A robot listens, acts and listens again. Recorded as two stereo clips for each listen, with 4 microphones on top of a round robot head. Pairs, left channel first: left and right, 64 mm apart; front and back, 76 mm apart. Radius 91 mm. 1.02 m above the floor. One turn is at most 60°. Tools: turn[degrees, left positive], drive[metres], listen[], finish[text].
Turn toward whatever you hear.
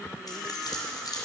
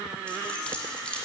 Thought: The keys jangling: 75° left.
Action: turn[60]
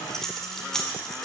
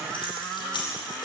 Thought: The keys jangling is now 10° left.
Action: turn[10]
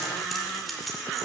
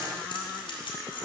Action: finish[Facing the keys jangling.]